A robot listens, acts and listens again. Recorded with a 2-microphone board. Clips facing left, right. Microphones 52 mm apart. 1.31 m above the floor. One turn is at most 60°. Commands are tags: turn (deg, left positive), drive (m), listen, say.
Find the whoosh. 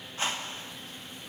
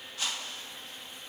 <turn deg="30"/>
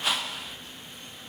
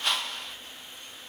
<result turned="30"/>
<say>Facing the whoosh, 1 to 2 m away.</say>